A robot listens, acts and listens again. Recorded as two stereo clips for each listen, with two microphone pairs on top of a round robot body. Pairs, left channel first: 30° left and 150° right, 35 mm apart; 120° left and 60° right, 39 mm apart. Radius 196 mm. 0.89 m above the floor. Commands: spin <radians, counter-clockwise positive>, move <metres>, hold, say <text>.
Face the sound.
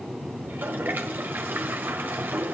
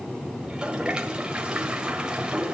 spin -2.27
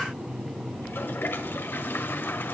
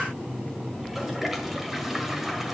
spin 0.44
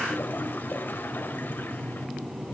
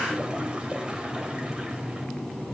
hold
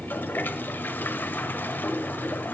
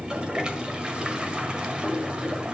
say Facing the toilet flushing.